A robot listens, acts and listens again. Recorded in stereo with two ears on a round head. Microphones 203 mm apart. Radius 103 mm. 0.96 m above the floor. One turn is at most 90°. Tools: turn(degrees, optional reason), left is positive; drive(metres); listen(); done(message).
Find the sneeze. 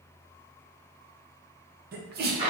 turn(degrees=-40, reason="The sneeze: about 40° right or 140° right.")
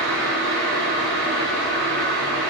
listen()
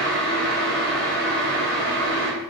done("I heard a sneeze, but can't make it out now. It was about straight ahead or 100° right.")